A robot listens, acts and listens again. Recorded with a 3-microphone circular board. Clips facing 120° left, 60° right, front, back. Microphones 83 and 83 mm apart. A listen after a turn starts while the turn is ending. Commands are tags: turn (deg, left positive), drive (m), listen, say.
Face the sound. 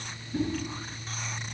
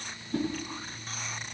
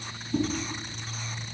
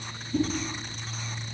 <turn deg="-25"/>
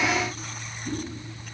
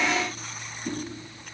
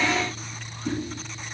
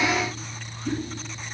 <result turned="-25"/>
<turn deg="-20"/>
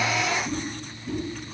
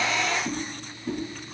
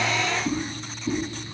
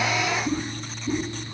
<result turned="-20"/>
<say>Found it: a whoosh, straight ahead, over 4 m away.</say>